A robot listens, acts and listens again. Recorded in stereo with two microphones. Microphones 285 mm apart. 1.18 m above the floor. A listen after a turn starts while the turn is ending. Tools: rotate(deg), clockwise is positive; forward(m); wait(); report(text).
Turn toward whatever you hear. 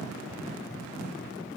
wait()
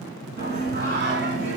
rotate(40)
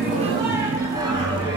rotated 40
rotate(15)
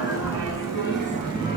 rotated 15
rotate(20)
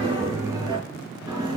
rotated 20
rotate(10)
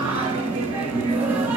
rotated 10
report("Facing the singing.")